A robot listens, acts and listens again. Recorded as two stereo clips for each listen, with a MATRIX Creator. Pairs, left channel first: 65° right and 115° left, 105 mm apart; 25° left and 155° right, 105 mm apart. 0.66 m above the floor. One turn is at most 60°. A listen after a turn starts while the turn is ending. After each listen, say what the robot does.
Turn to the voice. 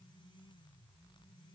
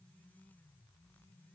Keep listening.
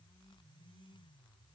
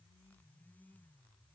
Keep listening.
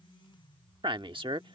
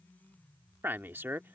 Turn 60° left.
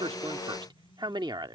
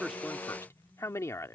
Turn 60° left.
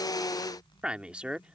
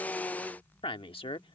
Turn 35° left.
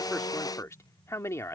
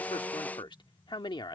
Turn 10° right.
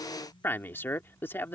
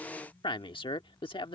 Facing the man speaking.